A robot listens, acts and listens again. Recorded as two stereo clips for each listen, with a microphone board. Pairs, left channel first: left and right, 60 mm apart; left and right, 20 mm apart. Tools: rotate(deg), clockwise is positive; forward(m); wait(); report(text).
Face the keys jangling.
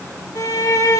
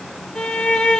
wait()
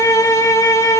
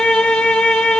wait()
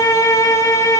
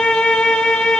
report("I can't make out keys jangling, only a violin.")